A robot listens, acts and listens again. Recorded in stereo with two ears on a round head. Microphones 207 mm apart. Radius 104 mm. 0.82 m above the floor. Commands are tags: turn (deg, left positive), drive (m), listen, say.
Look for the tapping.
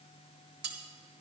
<listen/>
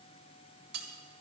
<listen/>
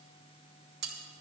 <say>I can't make out tapping to turn to.</say>